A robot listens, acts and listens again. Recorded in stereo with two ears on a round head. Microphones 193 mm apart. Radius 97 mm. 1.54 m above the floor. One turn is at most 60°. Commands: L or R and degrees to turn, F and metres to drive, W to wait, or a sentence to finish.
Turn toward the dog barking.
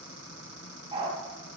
R25
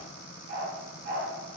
R60
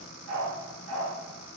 R60
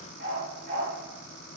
R45
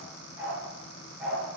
Found it: a dog barking, straight ahead, over 4 m away.